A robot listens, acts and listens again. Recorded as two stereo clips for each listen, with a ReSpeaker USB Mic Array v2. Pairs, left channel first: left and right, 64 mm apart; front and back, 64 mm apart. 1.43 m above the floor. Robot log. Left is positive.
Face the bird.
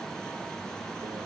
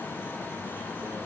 cmd idle
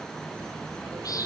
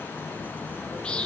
note: The bird: 75° left.
cmd yaw +75
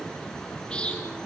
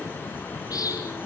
note: The bird is now 20° left.
cmd yaw +20
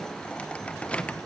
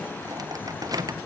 cmd idle
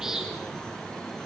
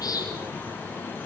note: The bird is now 10° right.
cmd yaw -10
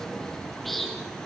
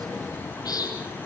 end: Found it: a bird, straight ahead.